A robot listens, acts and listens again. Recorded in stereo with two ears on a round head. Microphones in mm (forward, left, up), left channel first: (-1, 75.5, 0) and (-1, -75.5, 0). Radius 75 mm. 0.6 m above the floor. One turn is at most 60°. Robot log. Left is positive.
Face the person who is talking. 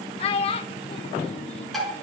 note: The child speaking: about 35° left or 145° left.
cmd yaw +35
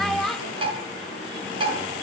end: Facing the child speaking, under 1 m away.